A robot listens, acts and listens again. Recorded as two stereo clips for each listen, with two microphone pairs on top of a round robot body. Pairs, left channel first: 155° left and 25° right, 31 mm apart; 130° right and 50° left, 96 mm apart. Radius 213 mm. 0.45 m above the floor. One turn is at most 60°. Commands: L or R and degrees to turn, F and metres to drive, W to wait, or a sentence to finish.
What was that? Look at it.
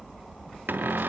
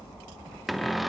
R40
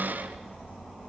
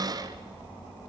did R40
Found it: a cupboard door, straight ahead.